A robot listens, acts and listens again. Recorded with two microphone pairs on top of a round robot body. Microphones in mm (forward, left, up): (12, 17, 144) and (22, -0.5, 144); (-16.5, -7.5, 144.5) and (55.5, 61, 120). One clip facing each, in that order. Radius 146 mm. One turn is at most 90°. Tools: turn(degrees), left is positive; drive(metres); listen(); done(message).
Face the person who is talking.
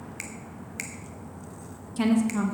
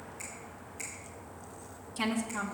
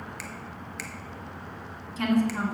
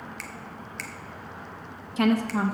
turn(degrees=25)
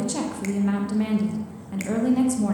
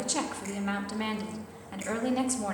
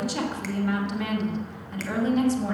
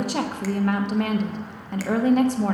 turn(degrees=15)
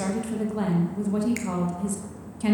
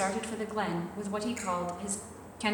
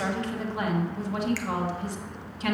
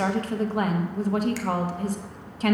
done("Facing the woman speaking, 1 to 2 m away.")